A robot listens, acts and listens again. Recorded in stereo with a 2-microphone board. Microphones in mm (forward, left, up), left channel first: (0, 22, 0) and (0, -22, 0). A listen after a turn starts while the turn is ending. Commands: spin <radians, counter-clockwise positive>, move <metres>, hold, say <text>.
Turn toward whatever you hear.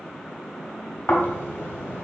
spin 1.05
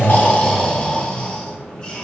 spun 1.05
spin 0.44
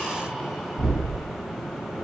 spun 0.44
say Facing the snoring, 1 to 2 m away.